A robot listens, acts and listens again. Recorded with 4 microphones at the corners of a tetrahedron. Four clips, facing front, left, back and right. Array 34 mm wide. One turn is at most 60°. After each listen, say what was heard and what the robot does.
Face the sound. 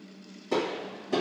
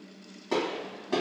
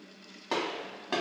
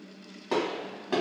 The gunshot: 155° right. Turn 60° right.
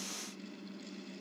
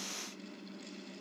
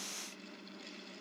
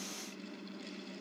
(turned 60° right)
Nothing new. It was at 95° right. Turn 60° right.
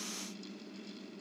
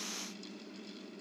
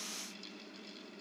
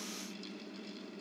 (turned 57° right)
Nothing new. It was at 40° right. Turn 40° right.
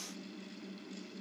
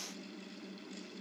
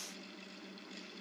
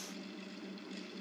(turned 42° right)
Facing where the gunshot came from. I can't hear it now.